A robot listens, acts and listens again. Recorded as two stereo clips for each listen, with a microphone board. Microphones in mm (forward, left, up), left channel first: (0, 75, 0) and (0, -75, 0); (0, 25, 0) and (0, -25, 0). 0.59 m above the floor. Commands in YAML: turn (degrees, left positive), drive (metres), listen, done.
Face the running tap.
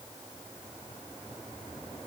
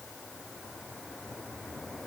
listen: true
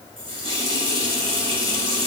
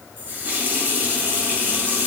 turn: -40
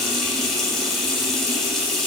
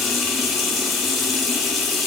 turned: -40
done: "Found it: a running tap, straight ahead, 2 to 4 m away."